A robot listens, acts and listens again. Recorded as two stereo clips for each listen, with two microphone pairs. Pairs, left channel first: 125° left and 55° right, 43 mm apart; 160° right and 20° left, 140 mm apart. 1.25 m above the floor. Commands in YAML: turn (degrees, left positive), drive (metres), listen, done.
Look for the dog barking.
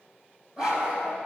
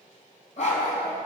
turn: -130
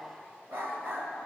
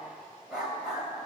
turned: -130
turn: -70
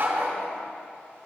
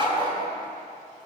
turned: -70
turn: -35
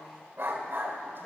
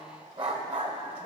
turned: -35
turn: -15
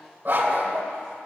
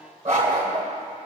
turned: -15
done: "Facing the dog barking, 1 to 2 m away."